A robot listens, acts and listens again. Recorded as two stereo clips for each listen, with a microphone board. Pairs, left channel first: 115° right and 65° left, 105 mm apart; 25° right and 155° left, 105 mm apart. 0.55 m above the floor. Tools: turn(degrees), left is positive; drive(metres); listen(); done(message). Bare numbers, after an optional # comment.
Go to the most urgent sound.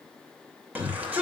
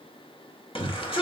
drive(1.0)
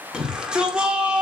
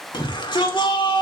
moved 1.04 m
# The shout is now 10° right.
turn(-10)
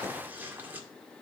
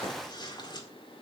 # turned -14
listen()
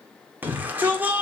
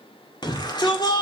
drive(1.0)
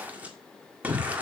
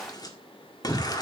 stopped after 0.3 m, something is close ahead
done("Arrived at the shout, straight ahead.")